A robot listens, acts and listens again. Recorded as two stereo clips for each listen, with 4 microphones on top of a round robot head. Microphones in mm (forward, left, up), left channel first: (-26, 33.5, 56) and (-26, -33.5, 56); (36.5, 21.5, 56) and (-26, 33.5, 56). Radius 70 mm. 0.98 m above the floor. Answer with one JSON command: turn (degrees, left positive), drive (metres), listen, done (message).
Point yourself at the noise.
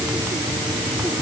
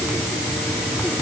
{"listen": true}
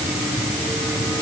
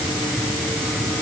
{"listen": true}
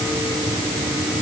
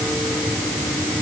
{"done": "I can't make out anything to turn to."}